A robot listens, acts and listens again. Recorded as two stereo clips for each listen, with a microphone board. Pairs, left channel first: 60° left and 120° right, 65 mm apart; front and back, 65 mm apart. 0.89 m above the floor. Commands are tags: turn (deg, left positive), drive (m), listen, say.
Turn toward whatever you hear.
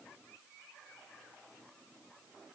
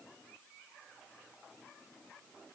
<listen/>
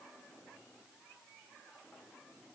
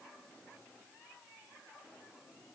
<listen/>
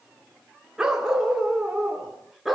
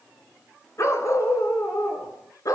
<turn deg="-35"/>
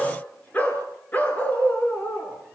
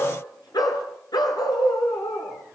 <say>Facing the dog barking.</say>